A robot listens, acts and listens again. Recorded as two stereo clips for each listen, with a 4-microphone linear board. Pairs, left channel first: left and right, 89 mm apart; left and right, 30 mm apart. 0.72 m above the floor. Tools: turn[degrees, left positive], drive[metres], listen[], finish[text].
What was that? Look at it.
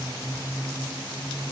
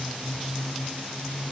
Action: listen[]
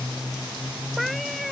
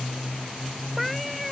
Action: turn[30]
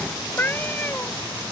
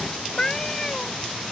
Thought: So it is at 160° left.
Action: turn[160]
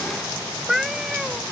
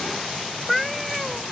Action: finish[Found it: a cat meowing, straight ahead.]